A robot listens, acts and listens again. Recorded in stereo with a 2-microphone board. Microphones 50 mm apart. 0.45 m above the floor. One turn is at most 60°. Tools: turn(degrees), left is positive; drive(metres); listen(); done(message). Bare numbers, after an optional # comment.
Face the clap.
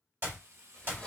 # The clap: about 45° right or 135° right.
turn(-45)
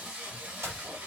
# So it is at 85° right.
turn(-60)
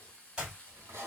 # The clap is now 25° right.
turn(-25)
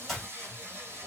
done("Facing the clap, 1 to 2 m away.")